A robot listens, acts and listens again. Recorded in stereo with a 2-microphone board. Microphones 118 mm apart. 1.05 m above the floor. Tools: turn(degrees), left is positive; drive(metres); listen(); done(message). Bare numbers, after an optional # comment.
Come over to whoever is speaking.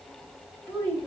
# The child speaking: about 20° left or 160° left.
turn(20)
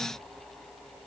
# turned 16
listen()
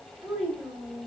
drive(1.0)
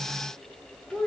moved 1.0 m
# The child speaking is now 10° left.
turn(10)
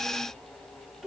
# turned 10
drive(1.0)
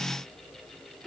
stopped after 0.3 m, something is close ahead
done("I am next to the child speaking.")